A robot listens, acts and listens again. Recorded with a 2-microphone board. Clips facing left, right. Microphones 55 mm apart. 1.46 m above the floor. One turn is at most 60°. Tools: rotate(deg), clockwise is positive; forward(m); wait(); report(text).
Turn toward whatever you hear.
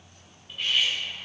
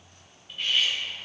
rotate(-30)
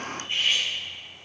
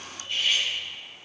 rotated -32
rotate(-60)
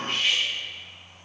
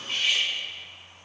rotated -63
rotate(-60)
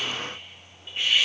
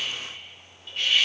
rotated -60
rotate(-20)
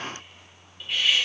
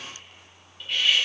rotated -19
report("Found it: cutlery clinking, straight ahead, 2 to 4 m away.")